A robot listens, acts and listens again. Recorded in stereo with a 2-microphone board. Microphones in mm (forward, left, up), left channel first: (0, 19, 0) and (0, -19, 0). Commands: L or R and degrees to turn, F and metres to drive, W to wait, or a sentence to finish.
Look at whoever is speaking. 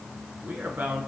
R55
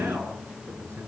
R70
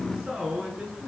R15
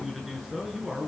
Facing the man speaking.